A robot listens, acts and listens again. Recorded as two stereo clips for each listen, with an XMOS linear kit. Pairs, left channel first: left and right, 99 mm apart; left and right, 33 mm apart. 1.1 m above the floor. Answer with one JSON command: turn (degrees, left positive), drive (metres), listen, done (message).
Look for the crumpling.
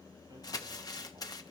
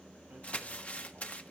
{"turn": 40}
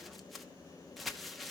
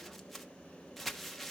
{"done": "Found it: crumpling, straight ahead."}